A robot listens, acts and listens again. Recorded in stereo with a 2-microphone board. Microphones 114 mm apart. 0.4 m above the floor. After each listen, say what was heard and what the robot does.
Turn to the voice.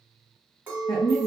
The woman speaking: about 35° left or 145° left. Turn 35° left.
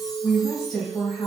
Found it: a woman speaking, straight ahead.